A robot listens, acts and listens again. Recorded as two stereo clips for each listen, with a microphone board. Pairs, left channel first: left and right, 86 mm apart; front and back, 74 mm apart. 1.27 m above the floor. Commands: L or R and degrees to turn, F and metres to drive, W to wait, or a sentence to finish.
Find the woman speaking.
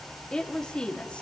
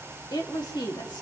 L15
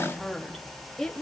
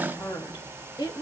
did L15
L10
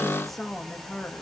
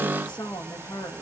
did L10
L10
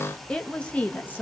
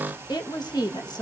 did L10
L25
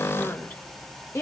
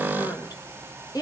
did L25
L30
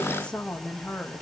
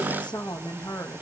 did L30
L10
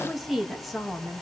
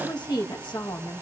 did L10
Found it: a woman speaking, straight ahead, 1 to 2 m away.